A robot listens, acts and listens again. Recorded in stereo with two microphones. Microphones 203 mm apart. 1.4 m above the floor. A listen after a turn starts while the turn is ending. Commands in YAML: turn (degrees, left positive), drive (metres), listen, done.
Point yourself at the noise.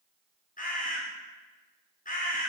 turn: 40
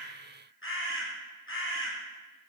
turn: 100
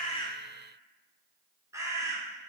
turn: -15
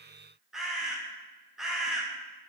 done: "Facing the bird."